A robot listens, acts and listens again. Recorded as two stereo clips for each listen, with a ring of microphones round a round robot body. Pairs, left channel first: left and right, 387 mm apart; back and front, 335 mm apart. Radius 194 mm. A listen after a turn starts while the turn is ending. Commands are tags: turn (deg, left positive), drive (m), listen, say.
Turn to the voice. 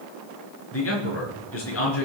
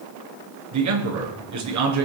<turn deg="35"/>
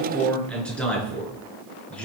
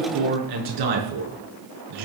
<say>Found it: a man speaking, straight ahead, over 4 m away.</say>